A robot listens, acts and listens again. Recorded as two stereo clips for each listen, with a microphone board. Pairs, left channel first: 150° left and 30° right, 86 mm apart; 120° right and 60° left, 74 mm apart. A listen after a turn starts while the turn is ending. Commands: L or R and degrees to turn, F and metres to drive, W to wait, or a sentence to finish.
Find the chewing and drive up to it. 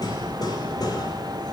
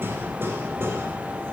W
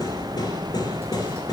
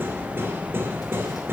W
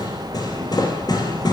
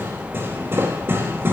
I can't make out chewing, only hammering.